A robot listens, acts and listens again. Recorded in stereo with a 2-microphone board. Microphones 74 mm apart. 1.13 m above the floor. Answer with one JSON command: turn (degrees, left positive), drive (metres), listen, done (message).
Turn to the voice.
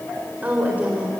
{"turn": -20}
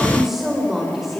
{"done": "Found it: a woman speaking, straight ahead."}